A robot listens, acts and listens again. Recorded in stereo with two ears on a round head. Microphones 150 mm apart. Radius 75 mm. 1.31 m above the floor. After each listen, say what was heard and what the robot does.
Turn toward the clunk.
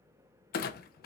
The clunk: about 65° left or 115° left. Turn 65° left.
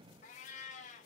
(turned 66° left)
Keep listening.
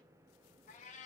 I heard a clunk, but can't make it out now. It was about 5° right or 50° left.